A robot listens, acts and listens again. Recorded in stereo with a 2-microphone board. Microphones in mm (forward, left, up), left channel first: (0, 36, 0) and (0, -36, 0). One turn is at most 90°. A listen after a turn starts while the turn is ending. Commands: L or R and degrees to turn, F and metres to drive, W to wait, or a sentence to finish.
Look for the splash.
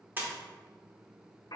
R30
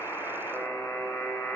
W
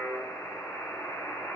I heard a splash, but can't make it out now. It was about straight ahead or 120° right.